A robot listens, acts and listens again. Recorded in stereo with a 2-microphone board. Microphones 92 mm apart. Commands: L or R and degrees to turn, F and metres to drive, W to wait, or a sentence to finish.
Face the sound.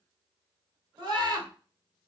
R55
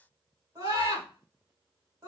R50
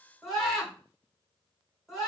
Facing the scream.